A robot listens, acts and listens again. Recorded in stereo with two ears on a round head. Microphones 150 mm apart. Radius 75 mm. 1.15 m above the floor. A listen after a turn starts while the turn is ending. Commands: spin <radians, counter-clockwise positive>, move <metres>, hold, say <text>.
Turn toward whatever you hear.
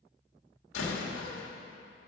spin 1.57
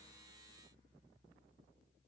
say I heard a door slam from this way, but can't make it out now.